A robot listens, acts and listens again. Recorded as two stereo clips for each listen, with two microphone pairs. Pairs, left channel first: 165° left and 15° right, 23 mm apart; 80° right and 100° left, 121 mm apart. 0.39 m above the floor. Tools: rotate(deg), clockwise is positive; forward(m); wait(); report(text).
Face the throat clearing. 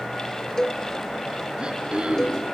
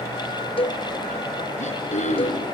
rotate(65)
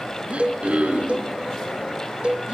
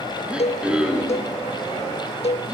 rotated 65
rotate(-15)
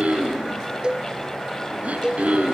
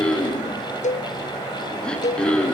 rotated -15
report("Facing the throat clearing.")